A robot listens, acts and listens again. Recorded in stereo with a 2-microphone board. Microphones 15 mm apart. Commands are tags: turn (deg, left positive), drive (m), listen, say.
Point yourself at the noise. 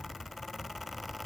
<listen/>
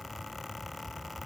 <listen/>
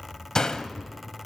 <turn deg="45"/>
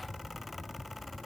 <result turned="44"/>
<listen/>
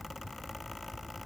<say>I heard a door slam, but can't make it out now. It was about straight ahead or 95° left.</say>